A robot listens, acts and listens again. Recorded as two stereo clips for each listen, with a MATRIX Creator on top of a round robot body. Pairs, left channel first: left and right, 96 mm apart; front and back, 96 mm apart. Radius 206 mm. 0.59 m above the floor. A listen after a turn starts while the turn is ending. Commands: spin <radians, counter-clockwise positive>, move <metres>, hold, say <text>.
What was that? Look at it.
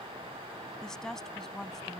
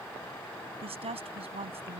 spin 3.05
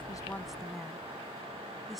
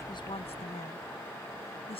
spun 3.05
say Found it: a woman speaking, straight ahead.